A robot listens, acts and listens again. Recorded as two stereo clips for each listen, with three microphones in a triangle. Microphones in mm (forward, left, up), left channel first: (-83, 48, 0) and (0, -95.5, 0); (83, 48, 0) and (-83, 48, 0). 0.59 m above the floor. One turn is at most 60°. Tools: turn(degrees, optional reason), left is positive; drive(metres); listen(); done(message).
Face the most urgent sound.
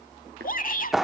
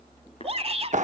turn(degrees=60, reason="The shout: 135° left.")
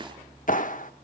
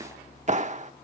turn(degrees=60, reason="Nothing new. It was at 75° left.")
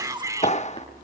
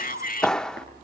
done("Found it: a shout, straight ahead, 1 to 2 m away.")